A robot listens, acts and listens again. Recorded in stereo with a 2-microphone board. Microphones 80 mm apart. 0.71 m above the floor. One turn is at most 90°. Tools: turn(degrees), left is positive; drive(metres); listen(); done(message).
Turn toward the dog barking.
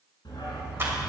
turn(degrees=70)
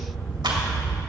turn(degrees=15)
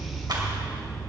turn(degrees=10)
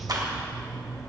done("Found it: a dog barking, straight ahead.")